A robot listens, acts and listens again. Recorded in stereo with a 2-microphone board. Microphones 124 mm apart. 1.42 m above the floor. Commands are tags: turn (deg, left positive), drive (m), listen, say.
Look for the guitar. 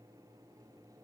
<listen/>
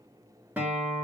<turn deg="-30"/>
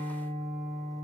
<turn deg="-135"/>
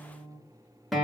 <say>Facing the guitar, 1 to 2 m away.</say>